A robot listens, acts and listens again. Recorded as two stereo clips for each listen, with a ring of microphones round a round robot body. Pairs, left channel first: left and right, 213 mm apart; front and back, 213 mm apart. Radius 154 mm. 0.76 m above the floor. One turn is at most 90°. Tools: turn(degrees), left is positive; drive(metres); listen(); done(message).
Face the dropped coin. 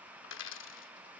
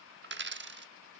turn(degrees=90)
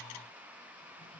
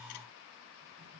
turn(degrees=50)
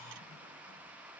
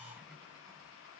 done("Facing where the dropped coin came from. I can't hear it now.")